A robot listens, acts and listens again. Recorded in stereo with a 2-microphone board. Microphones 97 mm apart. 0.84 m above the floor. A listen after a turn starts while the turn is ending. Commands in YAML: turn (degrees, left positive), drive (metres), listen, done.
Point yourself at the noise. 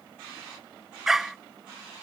turn: -30
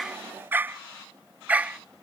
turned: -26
turn: -30
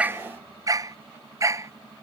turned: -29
turn: -145
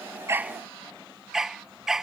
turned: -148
done: "Facing the dog barking."